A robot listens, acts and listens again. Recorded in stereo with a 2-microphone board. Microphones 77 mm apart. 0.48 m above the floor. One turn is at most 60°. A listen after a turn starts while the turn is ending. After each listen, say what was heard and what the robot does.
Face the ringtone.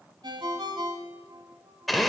Turn 60° right.
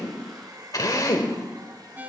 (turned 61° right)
So it is at 25° right. Turn 25° right.
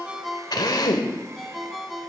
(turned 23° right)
Found it: a ringtone, straight ahead.